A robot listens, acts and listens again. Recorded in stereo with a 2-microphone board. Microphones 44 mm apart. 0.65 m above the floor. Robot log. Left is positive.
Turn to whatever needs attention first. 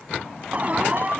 note: The alarm: about 40° right or 140° right.
cmd yaw -40
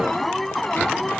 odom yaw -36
end: Found it: an alarm, straight ahead.